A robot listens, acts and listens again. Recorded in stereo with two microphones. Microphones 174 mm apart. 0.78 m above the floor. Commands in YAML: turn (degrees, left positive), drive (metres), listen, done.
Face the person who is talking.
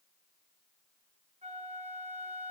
listen: true
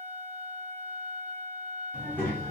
turn: 30
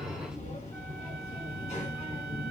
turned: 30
turn: 140
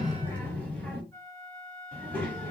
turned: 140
turn: 10
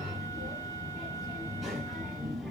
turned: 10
done: "Found it: a child speaking, straight ahead, 1 to 2 m away."